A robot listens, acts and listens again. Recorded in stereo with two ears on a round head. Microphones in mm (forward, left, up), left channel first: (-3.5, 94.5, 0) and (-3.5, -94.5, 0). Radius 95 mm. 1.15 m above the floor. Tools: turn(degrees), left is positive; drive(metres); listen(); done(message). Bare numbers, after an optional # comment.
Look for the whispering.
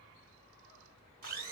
listen()
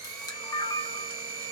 listen()
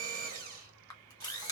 done("I can't make out whispering, only a camera shutter and a blender.")